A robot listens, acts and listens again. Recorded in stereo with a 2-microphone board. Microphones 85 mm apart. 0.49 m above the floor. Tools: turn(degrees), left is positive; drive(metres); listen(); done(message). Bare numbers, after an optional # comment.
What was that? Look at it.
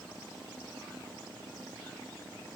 listen()
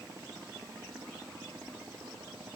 listen()
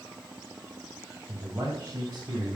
# The man speaking: about 30° right or 150° right.
turn(-30)
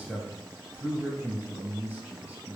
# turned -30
done("Found it: a man speaking, straight ahead, 2 to 4 m away.")